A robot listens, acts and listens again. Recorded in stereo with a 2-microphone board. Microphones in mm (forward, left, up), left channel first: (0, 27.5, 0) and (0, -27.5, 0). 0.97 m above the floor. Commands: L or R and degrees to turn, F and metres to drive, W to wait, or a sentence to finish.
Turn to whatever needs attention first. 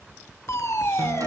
L55
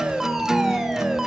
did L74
R10
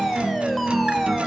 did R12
Found it: a fire alarm, straight ahead, 2 to 4 m away.